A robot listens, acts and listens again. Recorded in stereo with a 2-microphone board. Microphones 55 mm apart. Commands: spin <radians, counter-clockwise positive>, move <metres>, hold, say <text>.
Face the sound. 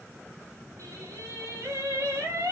spin -1.57
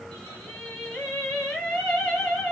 spin 0.17
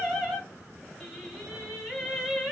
say Facing the singing.